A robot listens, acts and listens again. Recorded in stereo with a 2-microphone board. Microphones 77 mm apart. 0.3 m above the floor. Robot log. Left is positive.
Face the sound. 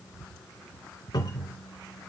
note: The cupboard door: about 60° left or 120° left.
cmd yaw +60
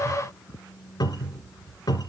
note: So it is at 55° left.
cmd yaw +55
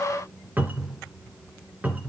note: The cupboard door is now 20° right.
cmd yaw -20
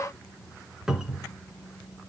end: Found it: a cupboard door, straight ahead.